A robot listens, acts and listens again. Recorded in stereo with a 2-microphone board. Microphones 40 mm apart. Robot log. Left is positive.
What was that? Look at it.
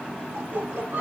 note: The laughter: about 55° right or 125° right.
cmd yaw -55
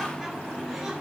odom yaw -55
cmd idle
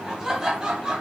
note: So it is at 20° right.
cmd yaw -20
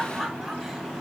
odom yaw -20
end: Found it: laughter, straight ahead.